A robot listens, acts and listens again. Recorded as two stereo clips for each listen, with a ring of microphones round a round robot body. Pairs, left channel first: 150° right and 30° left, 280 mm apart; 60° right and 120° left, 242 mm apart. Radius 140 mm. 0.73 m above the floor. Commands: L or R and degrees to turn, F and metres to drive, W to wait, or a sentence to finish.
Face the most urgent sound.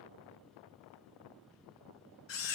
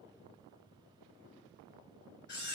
W
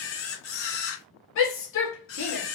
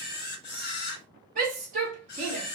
L175
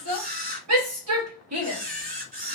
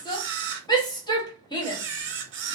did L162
L10
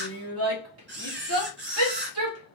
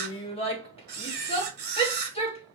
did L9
Facing the shout, 1 to 2 m away.